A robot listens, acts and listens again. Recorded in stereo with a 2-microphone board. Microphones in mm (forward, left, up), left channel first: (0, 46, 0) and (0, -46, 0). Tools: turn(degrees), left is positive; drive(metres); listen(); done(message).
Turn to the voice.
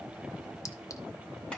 listen()
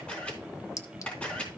listen()
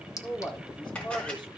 turn(degrees=55)
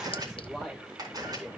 done("Found it: a man speaking, straight ahead.")